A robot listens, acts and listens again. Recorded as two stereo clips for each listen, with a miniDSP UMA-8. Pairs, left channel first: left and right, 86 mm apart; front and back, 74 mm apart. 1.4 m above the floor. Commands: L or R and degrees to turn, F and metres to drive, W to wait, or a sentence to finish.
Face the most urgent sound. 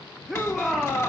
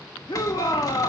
Found it: a shout, straight ahead, 1 to 2 m away.